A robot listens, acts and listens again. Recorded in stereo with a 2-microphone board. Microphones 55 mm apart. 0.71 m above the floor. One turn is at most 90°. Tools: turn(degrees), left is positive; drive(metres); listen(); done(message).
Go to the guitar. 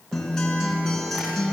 turn(degrees=30)
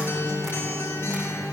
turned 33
turn(degrees=90)
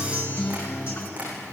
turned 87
turn(degrees=45)
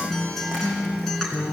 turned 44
drive(metres=1.0)
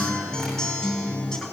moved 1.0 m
turn(degrees=10)
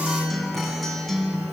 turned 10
drive(metres=1.0)
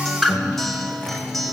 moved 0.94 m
drive(metres=1.0)
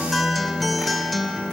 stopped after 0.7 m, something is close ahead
done("Arrived at the guitar, straight ahead.")